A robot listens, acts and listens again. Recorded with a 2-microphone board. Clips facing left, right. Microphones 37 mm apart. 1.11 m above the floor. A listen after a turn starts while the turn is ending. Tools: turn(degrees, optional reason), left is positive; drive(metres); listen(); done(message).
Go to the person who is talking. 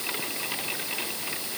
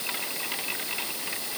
listen()
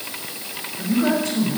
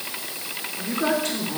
turn(degrees=-60, reason="The man speaking: about 60° right or 120° right.")
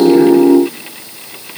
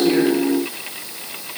listen()
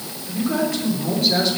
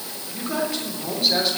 drive(metres=1.0)
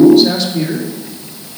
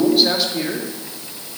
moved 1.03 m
drive(metres=1.0)
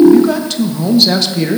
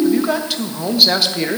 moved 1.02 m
drive(metres=1.0)
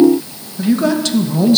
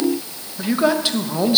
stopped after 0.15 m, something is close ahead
turn(degrees=-15, reason="The man speaking is now 15° right.")
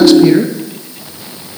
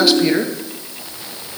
done("Arrived at the man speaking, straight ahead.")